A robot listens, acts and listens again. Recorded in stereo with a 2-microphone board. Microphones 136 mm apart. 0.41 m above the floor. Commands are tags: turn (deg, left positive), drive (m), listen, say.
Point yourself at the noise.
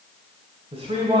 <turn deg="-50"/>
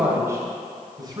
<turn deg="-30"/>
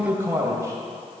<turn deg="-20"/>
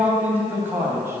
<turn deg="-20"/>
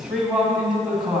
<say>Found it: a man speaking, straight ahead, 2 to 4 m away.</say>